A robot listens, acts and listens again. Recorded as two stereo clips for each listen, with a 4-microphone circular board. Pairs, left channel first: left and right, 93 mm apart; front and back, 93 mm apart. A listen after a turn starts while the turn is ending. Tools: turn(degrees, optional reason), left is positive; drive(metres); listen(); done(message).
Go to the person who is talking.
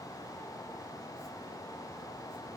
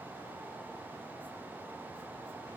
listen()
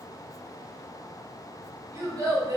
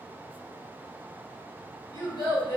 turn(degrees=-40, reason="The child speaking: 40° right.")
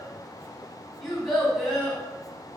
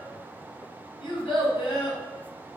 drive(metres=1.0)
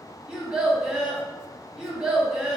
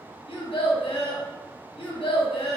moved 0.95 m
turn(degrees=-15, reason="The child speaking is now 15° right.")
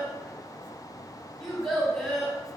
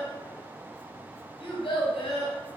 drive(metres=1.0)
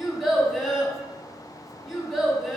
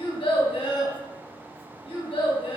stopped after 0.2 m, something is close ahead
done("I am next to the child speaking.")